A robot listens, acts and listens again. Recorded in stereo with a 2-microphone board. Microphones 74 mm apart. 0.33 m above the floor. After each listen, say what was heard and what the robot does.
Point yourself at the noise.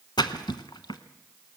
The splash: about 75° left or 105° left. Turn 75° left.
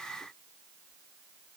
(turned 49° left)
Keep listening.
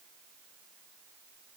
I heard a splash, but can't make it out now. It was about 25° left or 55° left.